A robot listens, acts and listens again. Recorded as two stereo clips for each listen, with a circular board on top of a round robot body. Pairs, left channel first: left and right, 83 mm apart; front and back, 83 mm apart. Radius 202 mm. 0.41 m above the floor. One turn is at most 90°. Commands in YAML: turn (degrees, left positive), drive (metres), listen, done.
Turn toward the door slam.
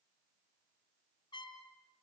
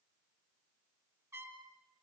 listen: true
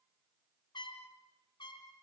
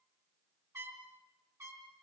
listen: true
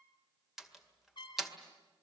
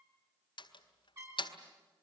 done: "Facing the door slam, 2 to 4 m away."